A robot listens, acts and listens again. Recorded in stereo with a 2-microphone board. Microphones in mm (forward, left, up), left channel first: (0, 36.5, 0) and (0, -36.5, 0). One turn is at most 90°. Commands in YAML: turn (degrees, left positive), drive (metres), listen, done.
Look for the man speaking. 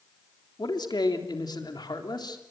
turn: 75
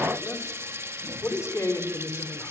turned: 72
turn: 40
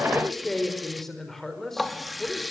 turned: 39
done: "Found it: a man speaking, straight ahead."